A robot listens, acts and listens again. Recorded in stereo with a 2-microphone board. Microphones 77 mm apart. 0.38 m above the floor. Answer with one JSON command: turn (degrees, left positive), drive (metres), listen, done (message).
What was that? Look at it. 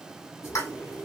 {"turn": 35}
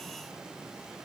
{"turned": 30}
{"listen": true}
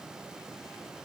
{"done": "I heard a pop, but can't make it out now. It was about 5° left or 115° left."}